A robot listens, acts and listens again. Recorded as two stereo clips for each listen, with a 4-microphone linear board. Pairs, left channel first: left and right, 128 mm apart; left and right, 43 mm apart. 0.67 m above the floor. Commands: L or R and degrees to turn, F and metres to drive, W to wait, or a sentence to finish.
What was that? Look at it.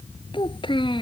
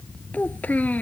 L40
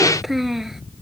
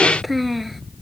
Facing the child speaking.